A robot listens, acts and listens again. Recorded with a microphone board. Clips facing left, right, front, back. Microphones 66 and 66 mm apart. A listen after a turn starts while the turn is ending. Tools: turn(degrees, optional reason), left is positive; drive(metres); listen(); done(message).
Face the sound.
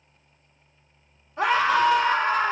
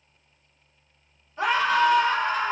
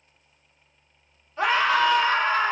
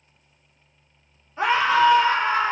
turn(degrees=110, reason="The scream: 110° left.")
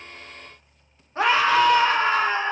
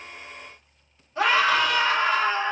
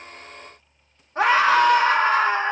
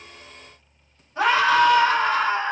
turn(degrees=40, reason="The scream is now 40° left.")
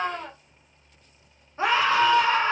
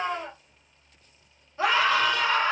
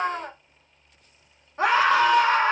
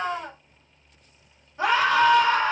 turn(degrees=30, reason="The scream is now 30° left.")
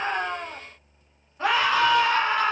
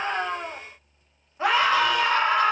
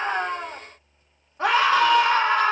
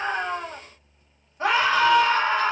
turn(degrees=-10, reason="The scream is now 10° right.")
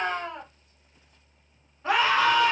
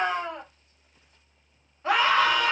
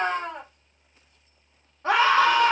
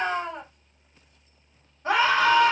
done("Facing the scream.")